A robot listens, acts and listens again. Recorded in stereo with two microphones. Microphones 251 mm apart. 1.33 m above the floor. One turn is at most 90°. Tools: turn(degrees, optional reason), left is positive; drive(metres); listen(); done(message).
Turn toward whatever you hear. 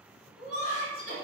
turn(degrees=20, reason="The laughter: about 20° left or 160° left.")
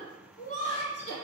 turn(degrees=20, reason="The laughter: about 20° left or 160° left.")
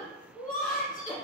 turn(degrees=30, reason="The laughter: about 30° left or 150° left.")
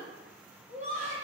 turn(degrees=90, reason="So it is at 130° left.")
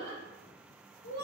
turn(degrees=70, reason="The laughter is now 70° left.")
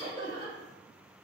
turn(degrees=15, reason="The laughter is now 15° left.")
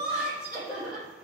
done("Found it: laughter, straight ahead, 2 to 4 m away.")